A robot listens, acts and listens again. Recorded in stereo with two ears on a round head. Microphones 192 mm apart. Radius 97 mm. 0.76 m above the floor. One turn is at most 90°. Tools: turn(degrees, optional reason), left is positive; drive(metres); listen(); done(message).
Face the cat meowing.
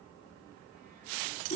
listen()
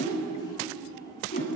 listen()
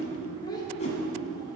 done("I can't make out a cat meowing, only a whoosh and a child speaking.")